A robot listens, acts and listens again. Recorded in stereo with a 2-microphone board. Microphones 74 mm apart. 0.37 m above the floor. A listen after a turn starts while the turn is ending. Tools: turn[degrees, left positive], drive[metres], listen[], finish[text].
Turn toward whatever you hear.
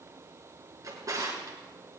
Thought: The drawer: about 45° right or 135° right.
Action: turn[-45]
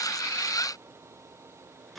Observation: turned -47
Action: finish[Found it: a drawer, straight ahead, 2 to 4 m away.]